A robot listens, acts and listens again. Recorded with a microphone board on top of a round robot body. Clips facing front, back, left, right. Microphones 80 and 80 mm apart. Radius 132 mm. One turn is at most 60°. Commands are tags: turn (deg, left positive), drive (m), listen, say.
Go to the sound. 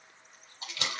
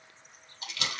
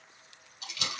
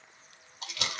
<turn deg="-60"/>
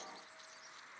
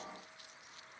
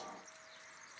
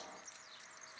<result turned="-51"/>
<turn deg="-10"/>
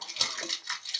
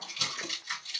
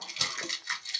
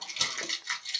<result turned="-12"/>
<drive m="1.0"/>
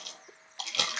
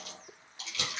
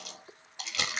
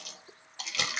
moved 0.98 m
<drive m="1.0"/>
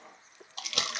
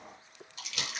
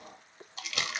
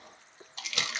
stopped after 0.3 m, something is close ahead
<say>I am next to the crumpling.</say>